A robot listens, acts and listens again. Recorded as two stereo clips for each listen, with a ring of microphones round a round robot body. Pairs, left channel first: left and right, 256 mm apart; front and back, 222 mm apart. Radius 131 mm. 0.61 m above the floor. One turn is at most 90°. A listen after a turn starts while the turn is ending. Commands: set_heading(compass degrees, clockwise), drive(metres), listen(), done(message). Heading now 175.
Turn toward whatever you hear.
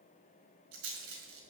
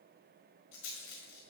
set_heading(220)
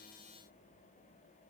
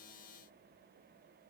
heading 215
listen()
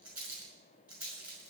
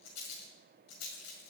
done("Found it: a rattle, straight ahead.")